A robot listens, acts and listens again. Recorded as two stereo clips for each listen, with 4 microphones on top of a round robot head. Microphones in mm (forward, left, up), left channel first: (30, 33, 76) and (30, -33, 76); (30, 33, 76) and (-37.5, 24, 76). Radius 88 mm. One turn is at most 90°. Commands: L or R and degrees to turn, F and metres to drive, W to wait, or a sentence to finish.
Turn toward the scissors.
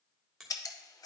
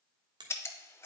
L60
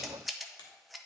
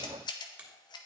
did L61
Found it: scissors, straight ahead, under 1 m away.